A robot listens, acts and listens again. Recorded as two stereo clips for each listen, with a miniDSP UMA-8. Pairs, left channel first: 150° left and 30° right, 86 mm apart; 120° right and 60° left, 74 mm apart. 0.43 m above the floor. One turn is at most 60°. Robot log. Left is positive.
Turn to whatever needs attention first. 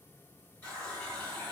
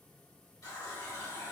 cmd idle
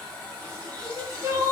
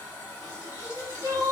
note: The crying: 25° left.
cmd yaw +25
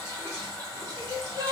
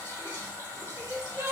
end: Facing the crying.